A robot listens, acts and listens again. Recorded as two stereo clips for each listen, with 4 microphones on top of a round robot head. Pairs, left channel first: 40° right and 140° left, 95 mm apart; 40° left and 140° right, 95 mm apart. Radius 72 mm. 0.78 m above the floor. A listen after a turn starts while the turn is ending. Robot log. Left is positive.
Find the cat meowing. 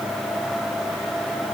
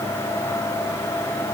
cmd idle
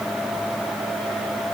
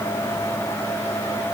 cmd idle
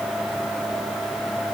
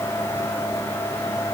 end: I can't make out a cat meowing to turn to.